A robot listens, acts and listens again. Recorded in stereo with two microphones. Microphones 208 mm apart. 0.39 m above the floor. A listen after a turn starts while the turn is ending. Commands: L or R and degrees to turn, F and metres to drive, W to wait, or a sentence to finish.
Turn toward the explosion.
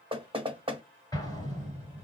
L20
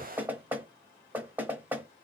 W
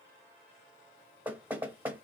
I heard an explosion, but can't make it out now. It was about straight ahead or 140° left.